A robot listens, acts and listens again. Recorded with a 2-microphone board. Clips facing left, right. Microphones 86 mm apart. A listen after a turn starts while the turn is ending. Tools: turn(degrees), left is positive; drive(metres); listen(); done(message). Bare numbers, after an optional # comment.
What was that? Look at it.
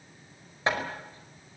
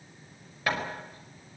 # The hammering: about 25° left or 155° left.
turn(25)
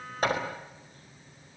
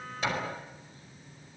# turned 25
# So it is at 130° left.
turn(130)
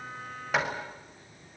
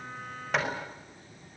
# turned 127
done("Facing the hammering, over 4 m away.")